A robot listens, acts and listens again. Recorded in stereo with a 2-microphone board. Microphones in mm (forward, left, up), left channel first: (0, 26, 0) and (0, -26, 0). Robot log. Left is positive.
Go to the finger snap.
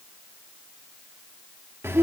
cmd idle
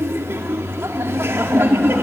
cmd idle
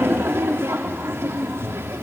end: I can't make out a finger snap, only laughter.